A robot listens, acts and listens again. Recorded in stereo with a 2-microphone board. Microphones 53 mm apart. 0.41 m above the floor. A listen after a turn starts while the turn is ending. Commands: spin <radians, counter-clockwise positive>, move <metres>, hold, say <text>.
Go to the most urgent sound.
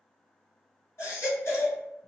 spin 0.96
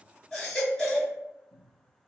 move 1.0
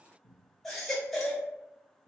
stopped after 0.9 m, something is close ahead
spin 0.17
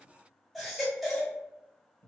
say I am next to the baby crying.